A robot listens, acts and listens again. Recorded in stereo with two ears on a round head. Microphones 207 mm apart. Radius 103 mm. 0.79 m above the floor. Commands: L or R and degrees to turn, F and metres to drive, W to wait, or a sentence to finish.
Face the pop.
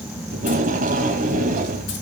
W
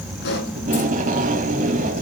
L50
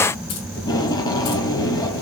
W
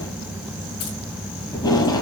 I heard a pop, but can't make it out now. It was about straight ahead or 80° left.